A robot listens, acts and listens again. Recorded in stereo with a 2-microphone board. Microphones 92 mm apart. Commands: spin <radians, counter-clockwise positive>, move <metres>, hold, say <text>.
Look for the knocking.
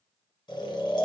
hold
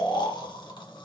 hold
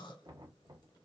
spin -0.87
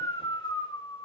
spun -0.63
hold
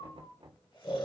spin -1.66
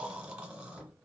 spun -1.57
say Found it: knocking, straight ahead.